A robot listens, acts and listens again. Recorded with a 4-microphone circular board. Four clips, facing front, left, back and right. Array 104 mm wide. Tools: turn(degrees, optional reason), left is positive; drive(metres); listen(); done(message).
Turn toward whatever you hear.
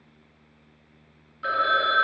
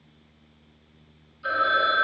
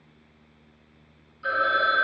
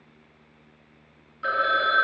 turn(degrees=-60, reason="The phone ringing: 60° right.")
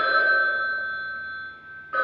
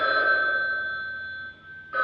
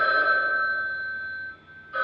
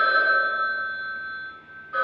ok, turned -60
turn(degrees=10, reason="The phone ringing is now 10° left.")
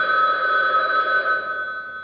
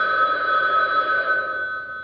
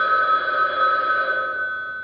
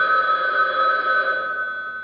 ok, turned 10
done("Facing the phone ringing, under 1 m away.")